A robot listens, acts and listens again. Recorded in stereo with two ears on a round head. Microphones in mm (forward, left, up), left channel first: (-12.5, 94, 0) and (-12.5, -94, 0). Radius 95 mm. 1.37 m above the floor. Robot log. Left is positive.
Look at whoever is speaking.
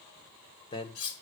note: The man speaking: about 25° left or 155° left.
cmd yaw +25
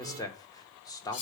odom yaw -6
note: The man speaking: about 15° left or 165° left.
cmd yaw +15
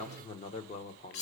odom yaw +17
note: So it is at 145° left.
cmd yaw +145
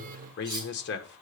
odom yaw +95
note: The man speaking is now 50° left.
cmd yaw +50
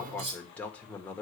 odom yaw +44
end: Facing the man speaking, 1 to 2 m away.